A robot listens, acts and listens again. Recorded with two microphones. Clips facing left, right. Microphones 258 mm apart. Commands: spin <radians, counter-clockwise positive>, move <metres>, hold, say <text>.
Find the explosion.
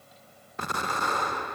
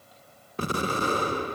spin -0.61
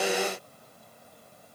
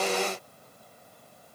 hold
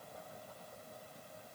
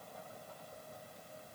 say I heard an explosion, but can't make it out now. It was about straight ahead or 110° right.